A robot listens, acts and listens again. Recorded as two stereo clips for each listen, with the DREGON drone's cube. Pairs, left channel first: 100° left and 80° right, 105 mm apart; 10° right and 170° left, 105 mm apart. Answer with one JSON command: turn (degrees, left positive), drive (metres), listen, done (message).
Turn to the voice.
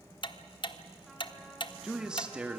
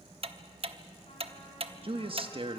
{"turn": -155}
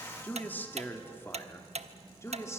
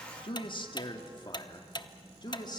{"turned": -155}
{"turn": 35}
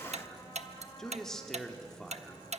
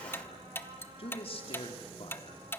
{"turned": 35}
{"turn": 15}
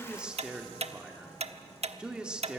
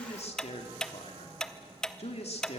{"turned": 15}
{"done": "Found it: a man speaking, straight ahead, 2 to 4 m away."}